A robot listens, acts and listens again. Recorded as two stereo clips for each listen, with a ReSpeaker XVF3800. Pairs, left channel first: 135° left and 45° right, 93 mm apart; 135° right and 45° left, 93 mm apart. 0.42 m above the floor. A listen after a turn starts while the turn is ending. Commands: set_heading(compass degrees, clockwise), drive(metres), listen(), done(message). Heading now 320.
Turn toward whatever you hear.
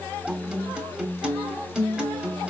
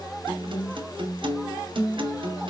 set_heading(285)
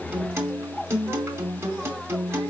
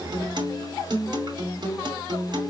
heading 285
set_heading(270)
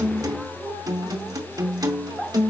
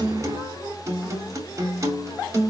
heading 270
done("Found it: a guitar, straight ahead, 2 to 4 m away.")